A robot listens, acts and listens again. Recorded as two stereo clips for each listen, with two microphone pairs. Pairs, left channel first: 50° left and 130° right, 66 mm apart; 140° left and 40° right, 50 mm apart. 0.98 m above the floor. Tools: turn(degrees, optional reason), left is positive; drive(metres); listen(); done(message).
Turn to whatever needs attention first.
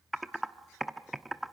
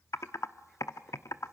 listen()
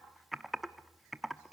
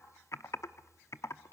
listen()
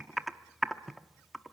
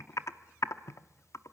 done("I can't make out anything urgent, only typing on a keyboard.")